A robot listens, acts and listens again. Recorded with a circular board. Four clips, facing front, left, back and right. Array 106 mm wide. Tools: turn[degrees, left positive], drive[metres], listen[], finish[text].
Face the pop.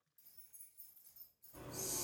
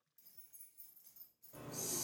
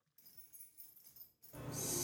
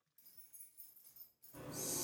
Action: listen[]
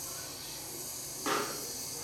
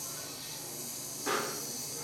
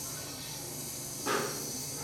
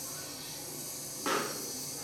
Thought: The pop: 60° right.
Action: turn[-60]
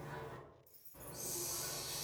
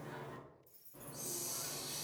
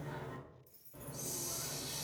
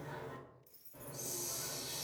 Action: finish[I heard a pop from this way, but can't make it out now.]